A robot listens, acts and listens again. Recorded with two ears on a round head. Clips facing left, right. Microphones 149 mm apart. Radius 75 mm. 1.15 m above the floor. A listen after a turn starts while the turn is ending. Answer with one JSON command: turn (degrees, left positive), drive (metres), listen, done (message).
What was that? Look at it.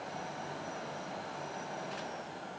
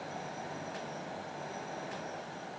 {"listen": true}
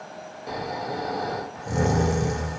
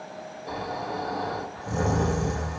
{"turn": 20}
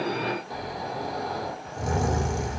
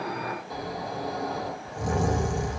{"done": "Facing the snoring, under 1 m away."}